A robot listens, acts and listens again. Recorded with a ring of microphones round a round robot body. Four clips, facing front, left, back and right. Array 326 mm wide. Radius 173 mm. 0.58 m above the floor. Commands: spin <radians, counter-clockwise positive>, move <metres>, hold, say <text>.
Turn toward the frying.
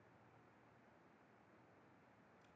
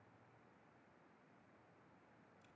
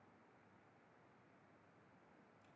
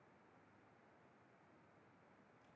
hold
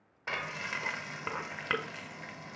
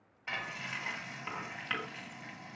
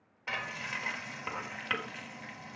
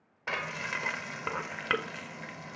spin -1.22
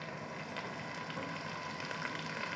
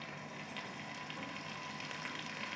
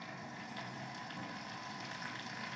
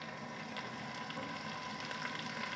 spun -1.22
spin -0.17
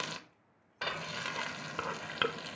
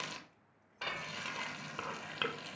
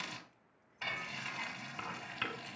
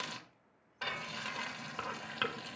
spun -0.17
say Found it: frying, straight ahead.